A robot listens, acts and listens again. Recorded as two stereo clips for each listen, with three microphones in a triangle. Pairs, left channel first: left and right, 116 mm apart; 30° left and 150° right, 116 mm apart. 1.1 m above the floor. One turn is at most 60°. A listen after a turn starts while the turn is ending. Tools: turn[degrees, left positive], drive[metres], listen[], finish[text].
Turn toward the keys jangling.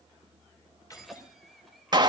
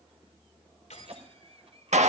Thought: The keys jangling: 30° left.
Action: turn[30]
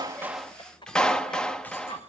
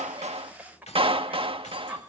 Thought: The keys jangling is now 15° left.
Action: turn[15]
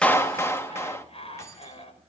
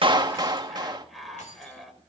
Thought: The keys jangling is now 30° left.
Action: turn[30]
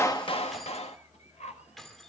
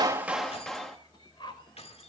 Action: finish[Found it: keys jangling, straight ahead, 2 to 4 m away.]